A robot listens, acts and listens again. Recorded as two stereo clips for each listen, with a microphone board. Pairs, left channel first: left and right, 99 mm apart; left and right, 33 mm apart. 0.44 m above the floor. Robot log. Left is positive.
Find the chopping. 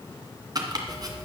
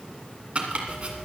note: The chopping: about 40° right or 140° right.
cmd yaw -40
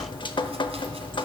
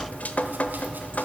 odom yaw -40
cmd idle
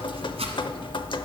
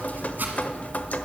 note: So it is at 100° right.
cmd yaw -100
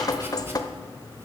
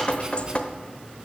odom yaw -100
cmd idle
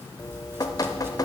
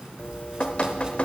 cmd idle
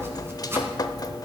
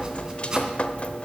note: The chopping is now 25° right.
cmd yaw -25
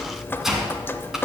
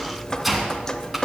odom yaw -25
end: Facing the chopping, 1 to 2 m away.